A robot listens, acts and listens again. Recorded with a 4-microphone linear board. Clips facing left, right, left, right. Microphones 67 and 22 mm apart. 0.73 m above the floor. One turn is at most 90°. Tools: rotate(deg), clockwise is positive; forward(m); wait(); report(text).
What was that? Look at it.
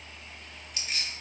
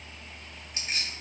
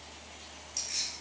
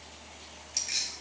rotate(40)
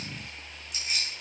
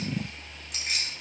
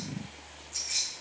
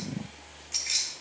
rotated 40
rotate(90)
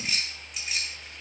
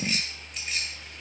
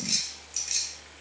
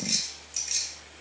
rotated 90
report("Found it: keys jangling, straight ahead, 2 to 4 m away.")